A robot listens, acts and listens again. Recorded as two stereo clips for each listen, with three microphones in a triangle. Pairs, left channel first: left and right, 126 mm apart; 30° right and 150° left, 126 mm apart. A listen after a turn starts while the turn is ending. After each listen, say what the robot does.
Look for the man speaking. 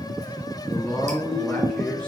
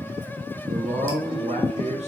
Turn 175° left.
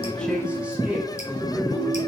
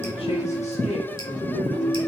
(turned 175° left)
Turn 10° right.
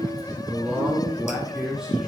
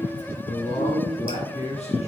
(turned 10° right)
Facing the man speaking.